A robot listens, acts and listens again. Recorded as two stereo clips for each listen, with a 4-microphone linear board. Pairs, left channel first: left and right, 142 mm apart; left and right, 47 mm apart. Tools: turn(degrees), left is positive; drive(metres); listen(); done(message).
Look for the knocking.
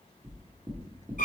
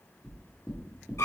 turn(degrees=-20)
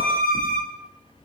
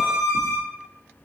turn(degrees=-140)
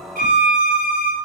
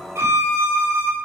listen()
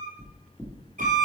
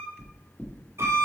turn(degrees=20)
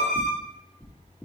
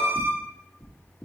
turn(degrees=10)
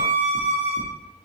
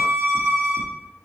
done("Found it: knocking, straight ahead, 1 to 2 m away.")